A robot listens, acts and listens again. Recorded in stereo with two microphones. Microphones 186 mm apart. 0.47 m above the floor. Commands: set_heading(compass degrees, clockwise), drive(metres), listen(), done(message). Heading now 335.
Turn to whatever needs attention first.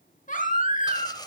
set_heading(290)
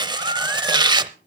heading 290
listen()
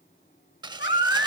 set_heading(200)
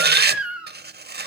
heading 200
done("Found it: a baby crying, straight ahead, 2 to 4 m away.")